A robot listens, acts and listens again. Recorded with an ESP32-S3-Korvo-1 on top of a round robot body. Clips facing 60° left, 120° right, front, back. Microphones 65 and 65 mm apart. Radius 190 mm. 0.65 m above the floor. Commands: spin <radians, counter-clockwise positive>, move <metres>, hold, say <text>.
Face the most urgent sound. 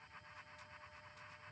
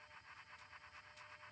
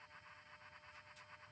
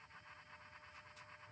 hold
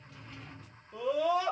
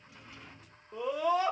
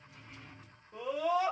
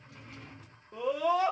spin -2.62
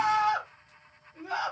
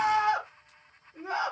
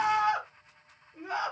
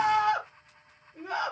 spin -1.13
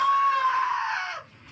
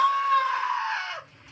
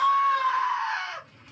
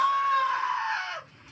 spin 0.17
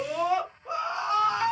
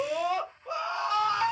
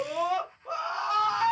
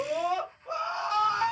say Facing the scream, 1 to 2 m away.